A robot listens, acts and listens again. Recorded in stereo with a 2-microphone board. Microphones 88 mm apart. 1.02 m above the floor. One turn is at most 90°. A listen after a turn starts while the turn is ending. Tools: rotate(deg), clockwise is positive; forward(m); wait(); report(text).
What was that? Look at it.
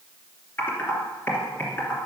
rotate(-25)
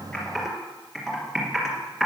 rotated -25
report("Found it: typing on a keyboard, straight ahead, 2 to 4 m away.")